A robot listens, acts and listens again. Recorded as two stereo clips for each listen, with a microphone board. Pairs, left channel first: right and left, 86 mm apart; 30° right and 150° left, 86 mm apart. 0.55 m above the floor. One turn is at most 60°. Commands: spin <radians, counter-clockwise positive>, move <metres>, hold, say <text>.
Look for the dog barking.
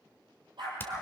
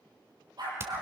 spin 1.05
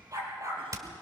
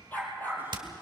spin 0.70
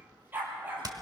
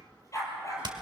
spin 0.35
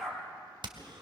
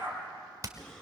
say Facing the dog barking, 2 to 4 m away.